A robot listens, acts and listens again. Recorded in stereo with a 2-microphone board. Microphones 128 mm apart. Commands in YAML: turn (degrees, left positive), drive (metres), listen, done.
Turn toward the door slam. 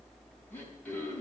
listen: true
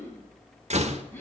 turn: -60
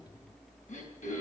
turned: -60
listen: true
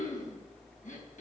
done: "I heard a door slam, but can't make it out now. It was about straight ahead or 60° right."